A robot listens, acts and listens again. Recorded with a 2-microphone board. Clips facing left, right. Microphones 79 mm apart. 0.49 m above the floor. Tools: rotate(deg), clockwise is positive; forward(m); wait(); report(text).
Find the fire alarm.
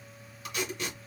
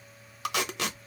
wait()
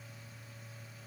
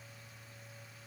wait()
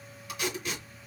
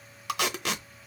report("I can't make out a fire alarm, only tape being pulled.")